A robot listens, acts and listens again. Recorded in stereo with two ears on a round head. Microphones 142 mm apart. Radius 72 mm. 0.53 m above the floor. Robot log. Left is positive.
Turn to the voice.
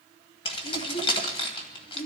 cmd yaw +90
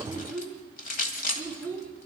note: So it is at 10° left.
cmd yaw +10
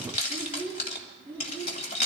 note: The child speaking is now 10° left.
cmd yaw +10
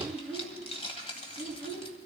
end: Facing the child speaking.